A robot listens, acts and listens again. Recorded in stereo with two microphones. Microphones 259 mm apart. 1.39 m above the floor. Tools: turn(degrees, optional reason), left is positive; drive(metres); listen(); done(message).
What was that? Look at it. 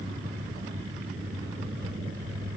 listen()
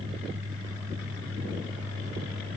listen()
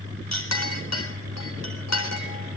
turn(degrees=90)
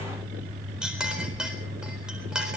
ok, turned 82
done("Found it: a clink, straight ahead.")